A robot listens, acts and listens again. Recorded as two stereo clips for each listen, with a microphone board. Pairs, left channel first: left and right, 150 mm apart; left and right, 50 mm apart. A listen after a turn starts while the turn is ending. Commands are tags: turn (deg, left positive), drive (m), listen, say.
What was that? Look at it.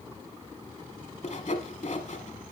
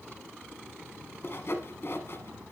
<turn deg="55"/>
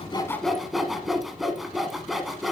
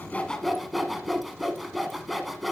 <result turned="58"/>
<say>Found it: sawing, straight ahead.</say>